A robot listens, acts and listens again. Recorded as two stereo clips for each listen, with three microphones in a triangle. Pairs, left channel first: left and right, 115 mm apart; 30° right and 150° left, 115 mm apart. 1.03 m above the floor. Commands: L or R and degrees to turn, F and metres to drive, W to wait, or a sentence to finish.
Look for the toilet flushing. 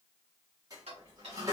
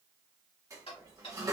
R150
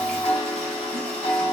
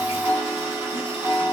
W
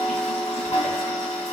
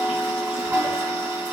W
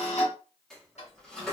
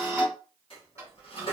Facing the toilet flushing, 1 to 2 m away.